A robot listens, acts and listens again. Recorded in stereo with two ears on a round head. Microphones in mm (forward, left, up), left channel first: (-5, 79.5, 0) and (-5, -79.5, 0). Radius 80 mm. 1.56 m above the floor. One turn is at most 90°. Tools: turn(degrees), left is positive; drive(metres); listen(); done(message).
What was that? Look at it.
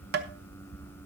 turn(degrees=-60)
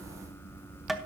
done("Facing the tapping.")